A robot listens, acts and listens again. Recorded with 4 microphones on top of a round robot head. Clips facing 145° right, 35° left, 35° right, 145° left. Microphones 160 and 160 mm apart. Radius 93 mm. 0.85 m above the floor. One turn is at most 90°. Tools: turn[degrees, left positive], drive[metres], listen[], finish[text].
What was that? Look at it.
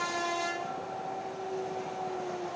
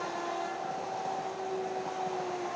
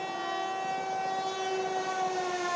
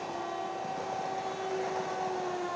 Action: listen[]
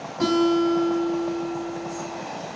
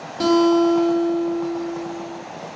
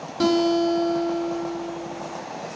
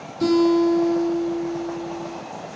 Thought: The guitar: 20° right.
Action: turn[-20]
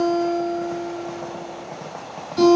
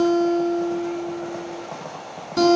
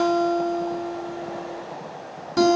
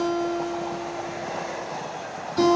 Action: finish[Found it: a guitar, straight ahead, 2 to 4 m away.]